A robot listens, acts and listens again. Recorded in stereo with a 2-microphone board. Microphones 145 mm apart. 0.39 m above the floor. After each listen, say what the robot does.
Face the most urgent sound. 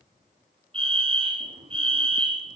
Turn 40° right.
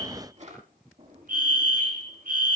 Turn 100° right.
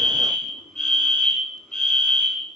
Facing the fire alarm, over 4 m away.